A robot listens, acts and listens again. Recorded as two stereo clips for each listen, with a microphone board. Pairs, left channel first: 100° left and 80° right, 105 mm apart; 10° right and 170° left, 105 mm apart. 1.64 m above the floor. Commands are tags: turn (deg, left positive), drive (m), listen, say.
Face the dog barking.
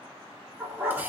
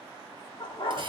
<turn deg="-10"/>
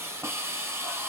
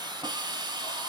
<listen/>
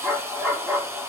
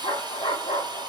<say>Found it: a dog barking, straight ahead, 1 to 2 m away.</say>